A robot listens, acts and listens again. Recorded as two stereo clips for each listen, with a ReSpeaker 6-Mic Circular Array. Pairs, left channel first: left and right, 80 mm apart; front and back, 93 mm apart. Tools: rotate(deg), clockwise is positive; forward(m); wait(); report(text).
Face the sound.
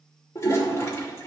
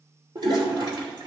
rotate(-145)
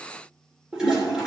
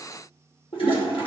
rotate(10)
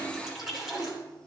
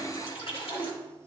report("Found it: a toilet flushing, straight ahead.")